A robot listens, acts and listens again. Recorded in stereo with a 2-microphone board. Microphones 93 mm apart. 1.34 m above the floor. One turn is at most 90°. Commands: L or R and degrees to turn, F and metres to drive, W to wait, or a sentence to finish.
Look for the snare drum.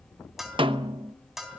R65
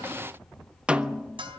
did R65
R10
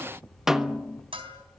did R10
Facing the snare drum, under 1 m away.